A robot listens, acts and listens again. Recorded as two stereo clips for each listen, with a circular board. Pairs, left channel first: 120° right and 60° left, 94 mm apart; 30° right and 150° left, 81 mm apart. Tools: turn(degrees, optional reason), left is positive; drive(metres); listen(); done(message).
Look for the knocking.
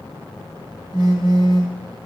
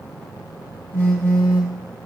listen()
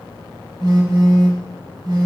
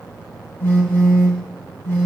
listen()
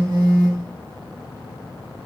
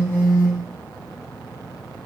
done("I can't make out knocking to turn to.")